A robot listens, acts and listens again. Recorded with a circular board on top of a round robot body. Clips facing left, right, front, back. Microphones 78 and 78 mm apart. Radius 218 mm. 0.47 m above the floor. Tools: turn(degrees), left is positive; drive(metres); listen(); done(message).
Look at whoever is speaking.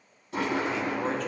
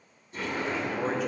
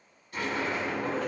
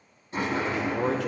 turn(degrees=-175)
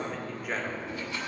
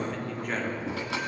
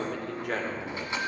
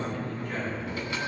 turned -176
done("Found it: a man speaking, straight ahead.")